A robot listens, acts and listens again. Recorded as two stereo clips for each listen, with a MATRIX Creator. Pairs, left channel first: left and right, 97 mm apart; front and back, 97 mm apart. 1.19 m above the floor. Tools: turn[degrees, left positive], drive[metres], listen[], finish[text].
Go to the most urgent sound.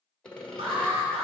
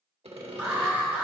Thought: The alarm: 105° right.
Action: turn[-105]
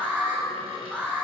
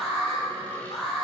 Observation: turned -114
Thought: The alarm is now 10° left.
Action: turn[10]
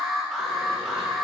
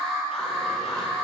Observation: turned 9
Action: drive[1.0]
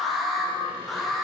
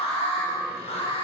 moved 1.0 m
Action: drive[1.0]
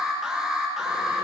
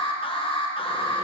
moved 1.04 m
Thought: The alarm is now 10° right.
Action: turn[-10]
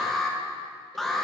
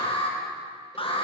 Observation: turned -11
Action: drive[1.0]
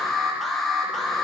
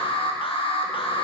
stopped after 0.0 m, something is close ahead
Action: finish[Arrived at the alarm, straight ahead.]